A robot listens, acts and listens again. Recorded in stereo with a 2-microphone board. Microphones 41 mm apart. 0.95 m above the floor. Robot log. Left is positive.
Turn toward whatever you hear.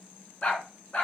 note: The dog barking: about 35° left or 145° left.
cmd yaw +35
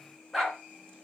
end: Found it: a dog barking, straight ahead.